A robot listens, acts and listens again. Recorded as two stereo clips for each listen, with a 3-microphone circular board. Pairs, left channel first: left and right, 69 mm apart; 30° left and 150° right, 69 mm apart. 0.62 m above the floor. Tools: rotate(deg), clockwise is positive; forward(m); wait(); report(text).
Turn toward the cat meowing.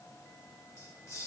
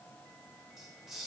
wait()
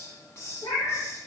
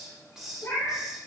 rotate(-80)
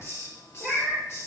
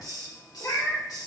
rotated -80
report("Facing the cat meowing, over 4 m away.")